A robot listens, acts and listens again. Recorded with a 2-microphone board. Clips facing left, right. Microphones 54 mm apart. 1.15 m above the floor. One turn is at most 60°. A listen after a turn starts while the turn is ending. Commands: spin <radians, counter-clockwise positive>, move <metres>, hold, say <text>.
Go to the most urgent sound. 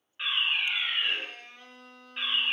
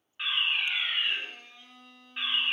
spin 0.52
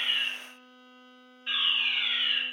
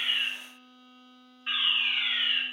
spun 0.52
spin -0.44
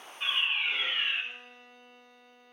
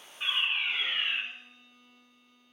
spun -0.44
move 1.0
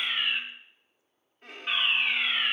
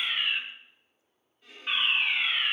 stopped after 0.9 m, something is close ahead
say Arrived at the fire alarm, straight ahead.